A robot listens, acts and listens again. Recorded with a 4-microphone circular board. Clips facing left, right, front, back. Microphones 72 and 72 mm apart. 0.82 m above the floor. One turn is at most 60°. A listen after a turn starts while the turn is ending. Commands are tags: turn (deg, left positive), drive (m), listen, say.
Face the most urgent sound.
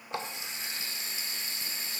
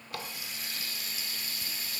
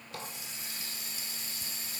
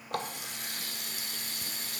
<listen/>
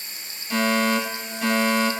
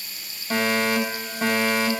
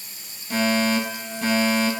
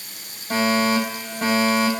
<turn deg="-60"/>
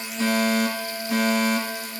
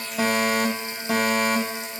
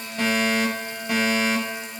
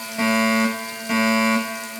<turn deg="-60"/>
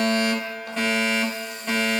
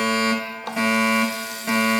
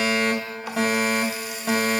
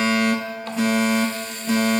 <turn deg="-10"/>
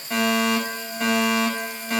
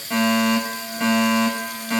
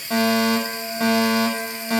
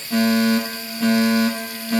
<say>Found it: a fire alarm, straight ahead, over 4 m away.</say>